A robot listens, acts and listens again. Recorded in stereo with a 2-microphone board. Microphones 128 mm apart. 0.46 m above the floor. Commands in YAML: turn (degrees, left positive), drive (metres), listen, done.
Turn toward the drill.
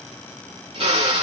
turn: -50
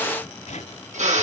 turn: -80
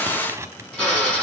done: "Facing the drill."